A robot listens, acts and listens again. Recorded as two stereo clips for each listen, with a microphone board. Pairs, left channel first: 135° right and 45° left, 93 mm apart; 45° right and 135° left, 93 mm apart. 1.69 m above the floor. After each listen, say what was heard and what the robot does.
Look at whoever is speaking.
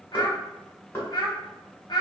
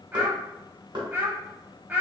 The child speaking: 155° right. Turn 155° right.
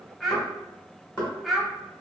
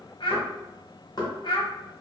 The child speaking is now 45° right. Turn 45° right.
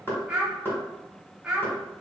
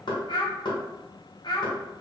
The child speaking is now 35° right. Turn 35° right.
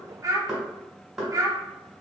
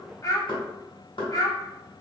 Facing the child speaking.